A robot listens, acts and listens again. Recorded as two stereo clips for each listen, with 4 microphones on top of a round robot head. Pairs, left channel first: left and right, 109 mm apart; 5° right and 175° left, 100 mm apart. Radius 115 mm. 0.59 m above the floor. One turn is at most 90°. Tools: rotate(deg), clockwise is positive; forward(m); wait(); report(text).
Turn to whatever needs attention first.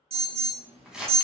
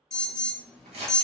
rotate(90)
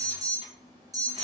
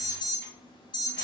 rotate(40)
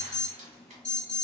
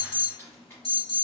rotate(-10)
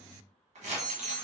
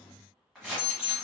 report("Facing the alarm.")